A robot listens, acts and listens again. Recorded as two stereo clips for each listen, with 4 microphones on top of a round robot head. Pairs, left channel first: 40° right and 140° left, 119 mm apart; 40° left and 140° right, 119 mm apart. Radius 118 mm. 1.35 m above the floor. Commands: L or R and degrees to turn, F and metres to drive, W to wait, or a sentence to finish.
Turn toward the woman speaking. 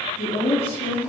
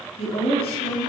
Found it: a woman speaking, straight ahead.